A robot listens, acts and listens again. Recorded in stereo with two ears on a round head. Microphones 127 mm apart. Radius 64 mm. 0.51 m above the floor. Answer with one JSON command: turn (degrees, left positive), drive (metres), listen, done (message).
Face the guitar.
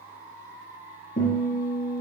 {"turn": 50}
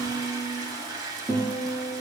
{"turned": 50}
{"done": "Found it: a guitar, straight ahead."}